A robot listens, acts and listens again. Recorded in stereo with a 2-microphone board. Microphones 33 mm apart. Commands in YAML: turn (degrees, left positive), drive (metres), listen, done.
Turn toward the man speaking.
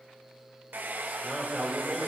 turn: -30
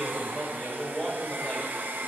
turn: 30
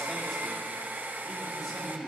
turn: 10
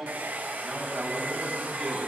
done: "Facing the man speaking."